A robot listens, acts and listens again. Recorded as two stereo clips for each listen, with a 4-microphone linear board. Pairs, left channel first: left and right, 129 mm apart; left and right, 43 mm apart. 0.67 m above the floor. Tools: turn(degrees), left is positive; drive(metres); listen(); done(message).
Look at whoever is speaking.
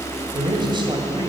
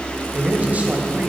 turn(degrees=-35)
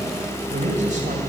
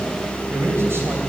turn(degrees=-110)
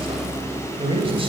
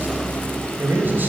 turn(degrees=-45)
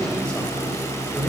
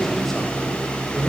done("Found it: a man speaking, straight ahead.")